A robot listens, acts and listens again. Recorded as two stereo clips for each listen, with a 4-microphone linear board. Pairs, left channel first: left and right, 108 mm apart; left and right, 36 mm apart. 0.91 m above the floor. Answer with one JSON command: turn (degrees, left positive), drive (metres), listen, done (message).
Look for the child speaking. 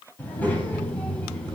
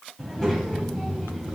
{"turn": 30}
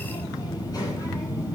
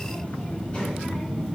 {"turn": 150}
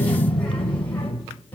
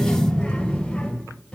{"turn": 15}
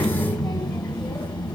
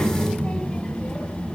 {"turn": 15}
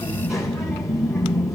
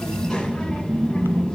{"done": "Facing the child speaking."}